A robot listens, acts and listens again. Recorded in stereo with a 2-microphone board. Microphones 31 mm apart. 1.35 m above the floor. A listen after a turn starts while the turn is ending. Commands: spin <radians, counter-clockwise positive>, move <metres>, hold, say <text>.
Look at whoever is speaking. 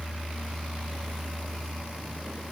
hold
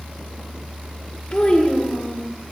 spin 0.61
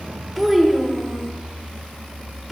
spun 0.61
say Facing the child speaking, under 1 m away.